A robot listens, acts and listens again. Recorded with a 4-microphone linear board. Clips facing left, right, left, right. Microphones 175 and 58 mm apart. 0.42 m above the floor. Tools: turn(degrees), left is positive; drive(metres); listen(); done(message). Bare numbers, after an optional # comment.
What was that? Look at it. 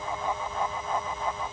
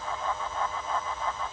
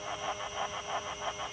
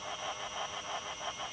listen()
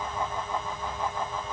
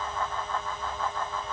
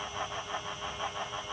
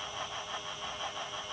listen()
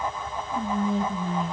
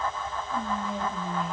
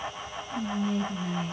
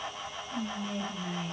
turn(-30)
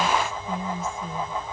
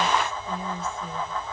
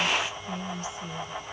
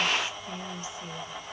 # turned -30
# So it is at 145° right.
turn(-145)
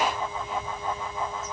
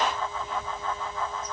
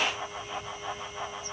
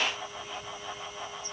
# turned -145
listen()
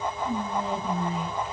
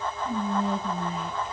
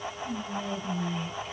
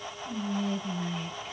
done("Found it: whispering, straight ahead, 1 to 2 m away.")